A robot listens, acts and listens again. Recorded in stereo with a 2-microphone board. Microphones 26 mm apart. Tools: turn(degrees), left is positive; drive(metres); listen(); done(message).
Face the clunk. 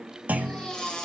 turn(degrees=-90)
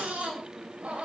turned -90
done("I heard a clunk from this way, but can't make it out now.")